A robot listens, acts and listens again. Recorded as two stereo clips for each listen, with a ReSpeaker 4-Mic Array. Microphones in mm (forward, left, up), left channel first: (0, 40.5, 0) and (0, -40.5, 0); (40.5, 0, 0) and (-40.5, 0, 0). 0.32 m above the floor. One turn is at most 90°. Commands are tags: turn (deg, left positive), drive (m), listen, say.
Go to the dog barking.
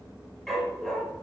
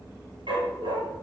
<turn deg="90"/>
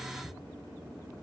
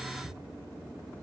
<turn deg="85"/>
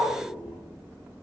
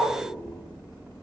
<turn deg="-25"/>
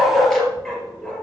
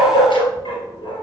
<drive m="1.0"/>
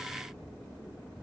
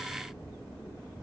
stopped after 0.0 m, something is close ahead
<listen/>
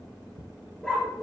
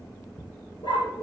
<say>Blocked. The dog barking is further on, straight ahead.</say>